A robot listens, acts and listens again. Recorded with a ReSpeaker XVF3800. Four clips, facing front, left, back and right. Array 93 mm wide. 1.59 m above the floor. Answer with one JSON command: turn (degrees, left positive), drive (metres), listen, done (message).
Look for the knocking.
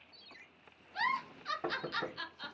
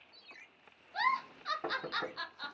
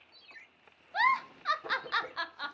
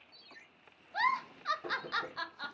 {"turn": 45}
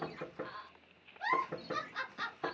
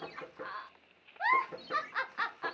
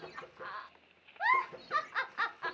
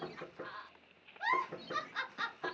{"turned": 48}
{"done": "Found it: knocking, straight ahead, 1 to 2 m away."}